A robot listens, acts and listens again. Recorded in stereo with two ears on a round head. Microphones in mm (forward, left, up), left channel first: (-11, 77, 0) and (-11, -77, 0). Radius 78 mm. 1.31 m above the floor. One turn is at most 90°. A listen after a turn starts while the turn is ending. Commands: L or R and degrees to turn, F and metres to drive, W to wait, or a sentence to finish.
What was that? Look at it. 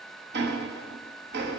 R70
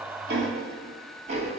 R40
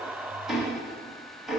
Facing the ticking, 1 to 2 m away.